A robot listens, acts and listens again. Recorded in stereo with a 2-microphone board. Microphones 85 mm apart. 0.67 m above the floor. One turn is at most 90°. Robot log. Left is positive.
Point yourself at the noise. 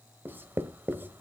note: The writing: about 25° right or 155° right.
cmd yaw -25
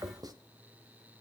note: So it is at 130° right.
cmd yaw -90
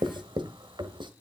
note: The writing is now 70° right.
cmd yaw -70
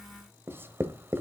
note: The writing is now 25° right.
cmd yaw -25
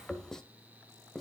end: Found it: writing, straight ahead.